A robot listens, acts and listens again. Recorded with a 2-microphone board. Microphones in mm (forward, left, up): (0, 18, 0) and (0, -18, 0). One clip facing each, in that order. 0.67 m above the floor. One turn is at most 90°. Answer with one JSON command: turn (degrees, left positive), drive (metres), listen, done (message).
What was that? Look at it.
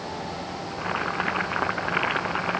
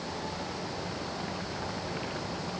{"turn": 60}
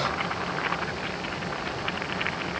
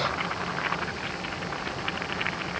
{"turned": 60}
{"done": "Found it: boiling, straight ahead."}